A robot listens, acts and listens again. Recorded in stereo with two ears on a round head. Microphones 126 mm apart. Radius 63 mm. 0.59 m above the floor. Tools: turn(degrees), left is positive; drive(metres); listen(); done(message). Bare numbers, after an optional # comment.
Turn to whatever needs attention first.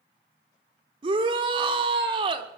# The shout: about 35° right or 145° right.
turn(-35)
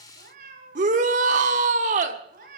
# So it is at 100° right.
turn(-100)
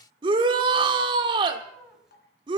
# The shout is now 40° right.
turn(-40)
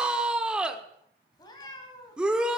done("Found it: a shout, straight ahead, 1 to 2 m away.")